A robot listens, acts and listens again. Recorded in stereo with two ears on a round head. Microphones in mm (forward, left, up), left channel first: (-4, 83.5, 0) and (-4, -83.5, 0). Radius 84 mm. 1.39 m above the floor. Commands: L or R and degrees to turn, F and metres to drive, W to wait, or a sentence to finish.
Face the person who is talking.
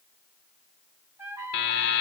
W
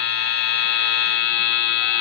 W
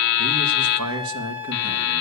R90
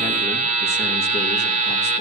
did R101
L10
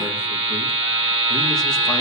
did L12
W
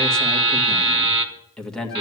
Facing the man speaking, 1 to 2 m away.